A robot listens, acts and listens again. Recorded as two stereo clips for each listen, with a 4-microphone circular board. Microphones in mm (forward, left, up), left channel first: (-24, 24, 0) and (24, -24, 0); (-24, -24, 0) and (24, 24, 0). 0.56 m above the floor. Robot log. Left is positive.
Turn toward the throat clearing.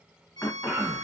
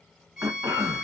note: The throat clearing: 80° left.
cmd yaw +80
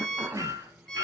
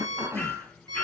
end: Facing the throat clearing.